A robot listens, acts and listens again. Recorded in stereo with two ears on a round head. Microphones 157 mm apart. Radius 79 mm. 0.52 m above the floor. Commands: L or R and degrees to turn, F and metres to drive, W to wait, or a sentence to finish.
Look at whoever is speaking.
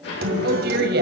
R65
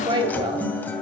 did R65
R25
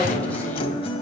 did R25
W
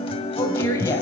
L20
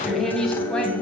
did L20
Facing the woman speaking, 2 to 4 m away.